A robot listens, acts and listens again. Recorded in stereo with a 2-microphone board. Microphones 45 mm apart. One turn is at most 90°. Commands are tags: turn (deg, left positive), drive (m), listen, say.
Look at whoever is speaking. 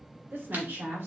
<turn deg="-55"/>
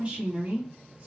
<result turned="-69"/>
<turn deg="-30"/>
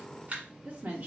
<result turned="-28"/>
<turn deg="-35"/>
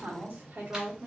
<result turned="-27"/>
<turn deg="-40"/>
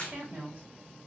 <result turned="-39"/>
<turn deg="-25"/>
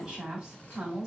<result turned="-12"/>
<turn deg="-15"/>
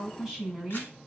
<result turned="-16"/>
<say>Found it: a woman speaking, straight ahead.</say>